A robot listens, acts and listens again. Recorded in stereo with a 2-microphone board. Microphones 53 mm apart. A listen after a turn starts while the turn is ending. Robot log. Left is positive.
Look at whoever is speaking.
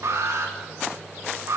cmd idle
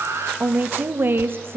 note: The woman speaking: about 50° right or 130° right.
cmd yaw -50
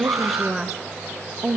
note: So it is at 20° right.
cmd yaw -20
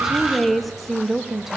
end: Found it: a woman speaking, straight ahead.